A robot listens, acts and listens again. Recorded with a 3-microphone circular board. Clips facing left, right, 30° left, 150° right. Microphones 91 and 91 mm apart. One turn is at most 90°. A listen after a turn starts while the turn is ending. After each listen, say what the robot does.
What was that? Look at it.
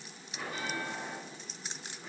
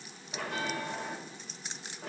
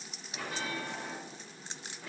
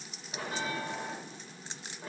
Turn 90° right.
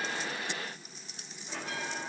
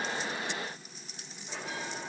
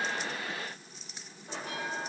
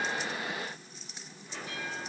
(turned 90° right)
Facing the bell.